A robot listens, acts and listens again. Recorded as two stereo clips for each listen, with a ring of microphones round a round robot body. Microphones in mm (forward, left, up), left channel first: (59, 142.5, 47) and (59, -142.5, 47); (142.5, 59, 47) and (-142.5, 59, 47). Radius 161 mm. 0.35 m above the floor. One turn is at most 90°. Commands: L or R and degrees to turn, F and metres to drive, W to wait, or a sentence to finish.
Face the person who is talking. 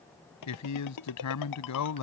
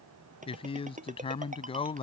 L70
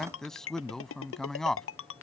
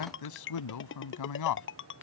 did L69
Facing the man speaking.